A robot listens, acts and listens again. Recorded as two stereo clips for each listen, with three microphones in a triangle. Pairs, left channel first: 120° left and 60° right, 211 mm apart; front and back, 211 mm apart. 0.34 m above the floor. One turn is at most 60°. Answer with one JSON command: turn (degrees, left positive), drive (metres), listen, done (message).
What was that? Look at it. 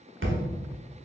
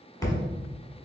{"turn": -60}
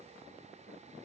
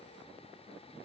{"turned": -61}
{"turn": -15}
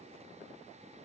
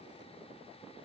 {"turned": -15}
{"done": "I heard a thud from this way, but can't make it out now."}